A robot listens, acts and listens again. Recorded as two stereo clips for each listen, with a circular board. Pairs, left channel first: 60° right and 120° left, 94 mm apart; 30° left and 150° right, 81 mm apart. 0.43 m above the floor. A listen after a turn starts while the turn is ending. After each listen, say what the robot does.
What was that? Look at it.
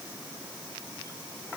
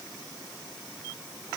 Keep listening.
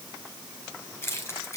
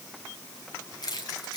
Found it: keys jangling, straight ahead.